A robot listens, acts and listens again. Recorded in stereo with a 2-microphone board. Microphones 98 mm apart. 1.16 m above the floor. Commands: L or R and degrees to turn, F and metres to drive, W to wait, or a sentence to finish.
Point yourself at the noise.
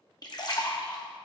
L45
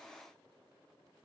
W
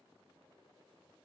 I heard a splash, but can't make it out now. It was about straight ahead or 90° left.